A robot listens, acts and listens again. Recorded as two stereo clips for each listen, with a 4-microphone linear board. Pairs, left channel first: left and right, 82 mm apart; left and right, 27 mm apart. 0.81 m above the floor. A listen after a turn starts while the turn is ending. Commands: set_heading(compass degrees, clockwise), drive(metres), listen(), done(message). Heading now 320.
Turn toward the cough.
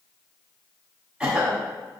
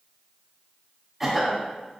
set_heading(350)
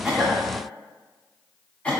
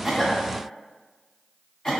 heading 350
set_heading(330)
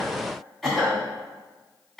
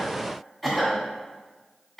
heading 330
done("Facing the cough, 1 to 2 m away.")